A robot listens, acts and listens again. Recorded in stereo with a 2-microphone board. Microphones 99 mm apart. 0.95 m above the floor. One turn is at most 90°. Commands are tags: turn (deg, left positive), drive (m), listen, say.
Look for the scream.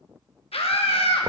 <turn deg="90"/>
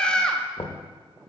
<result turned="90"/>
<turn deg="10"/>
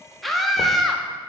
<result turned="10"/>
<say>Found it: a scream, straight ahead.</say>